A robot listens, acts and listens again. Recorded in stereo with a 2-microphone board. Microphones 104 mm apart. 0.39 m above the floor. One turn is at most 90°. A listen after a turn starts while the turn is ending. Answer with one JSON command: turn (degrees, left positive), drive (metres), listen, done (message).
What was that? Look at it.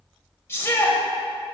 {"turn": 25}
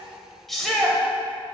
{"done": "Found it: a shout, straight ahead, 1 to 2 m away."}